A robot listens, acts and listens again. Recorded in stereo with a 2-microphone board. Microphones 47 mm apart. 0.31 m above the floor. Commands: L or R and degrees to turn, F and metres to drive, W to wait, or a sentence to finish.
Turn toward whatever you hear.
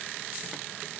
W
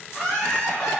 L25
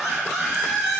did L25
Found it: laughter, straight ahead, 1 to 2 m away.